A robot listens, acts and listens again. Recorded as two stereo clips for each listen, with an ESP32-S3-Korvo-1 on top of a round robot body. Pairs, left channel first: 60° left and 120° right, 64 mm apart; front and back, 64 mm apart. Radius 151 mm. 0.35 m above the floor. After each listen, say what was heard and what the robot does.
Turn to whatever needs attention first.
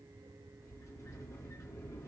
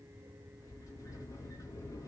Keep listening.
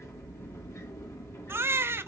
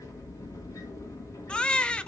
The baby crying: 75° right. Turn 75° right.
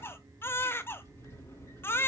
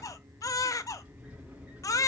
The baby crying is now 10° left. Turn 10° left.
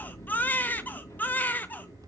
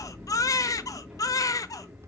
Facing the baby crying, under 1 m away.